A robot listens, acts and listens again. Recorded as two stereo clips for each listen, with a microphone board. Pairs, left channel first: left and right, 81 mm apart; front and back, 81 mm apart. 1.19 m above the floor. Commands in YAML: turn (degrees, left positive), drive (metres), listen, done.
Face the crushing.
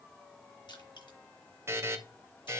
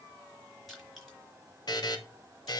turn: 90
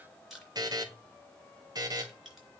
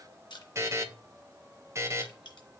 done: "Found it: crushing, straight ahead, 2 to 4 m away."